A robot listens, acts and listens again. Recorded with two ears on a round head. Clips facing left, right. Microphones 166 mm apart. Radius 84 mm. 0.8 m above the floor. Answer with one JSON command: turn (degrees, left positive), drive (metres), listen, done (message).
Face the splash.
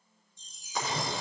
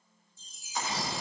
{"turn": 90}
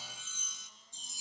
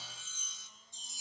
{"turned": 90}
{"done": "I heard a splash from this way, but can't make it out now."}